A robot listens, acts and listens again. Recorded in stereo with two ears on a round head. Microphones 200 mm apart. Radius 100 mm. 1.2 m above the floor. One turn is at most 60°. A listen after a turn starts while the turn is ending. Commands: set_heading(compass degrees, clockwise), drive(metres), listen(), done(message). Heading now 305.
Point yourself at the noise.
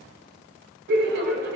set_heading(0)
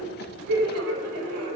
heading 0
set_heading(60)
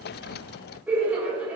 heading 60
set_heading(70)
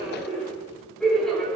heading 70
done("Found it: laughter, straight ahead, 2 to 4 m away.")